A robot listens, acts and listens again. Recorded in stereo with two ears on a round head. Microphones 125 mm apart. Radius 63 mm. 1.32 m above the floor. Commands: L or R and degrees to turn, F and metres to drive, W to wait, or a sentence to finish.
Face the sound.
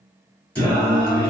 L30
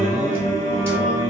R20
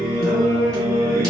Found it: singing, straight ahead.